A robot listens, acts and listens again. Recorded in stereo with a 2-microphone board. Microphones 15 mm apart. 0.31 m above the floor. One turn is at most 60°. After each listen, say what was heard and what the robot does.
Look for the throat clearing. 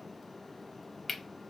Keep listening.
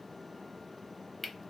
Keep listening.
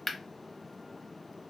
I can't make out throat clearing to turn to.